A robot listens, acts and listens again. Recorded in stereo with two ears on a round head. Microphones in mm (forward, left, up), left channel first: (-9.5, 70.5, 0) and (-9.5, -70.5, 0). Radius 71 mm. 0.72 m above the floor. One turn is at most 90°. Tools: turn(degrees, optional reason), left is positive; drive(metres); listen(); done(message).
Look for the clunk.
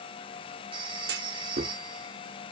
turn(degrees=-70, reason="The clunk: about 70° right or 110° right.")
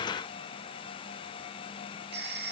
listen()
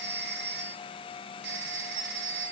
done("I heard a clunk, but can't make it out now. It was about straight ahead or 40° right.")